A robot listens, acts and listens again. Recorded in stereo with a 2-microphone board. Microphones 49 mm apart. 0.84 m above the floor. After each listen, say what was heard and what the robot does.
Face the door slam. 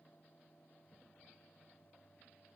Keep listening.
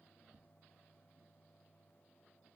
Keep listening.
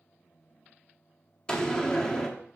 The door slam: about 15° left or 165° left. Turn 15° left.
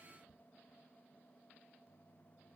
Keep listening.
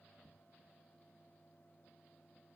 I heard a door slam, but can't make it out now. It was about straight ahead or 150° left.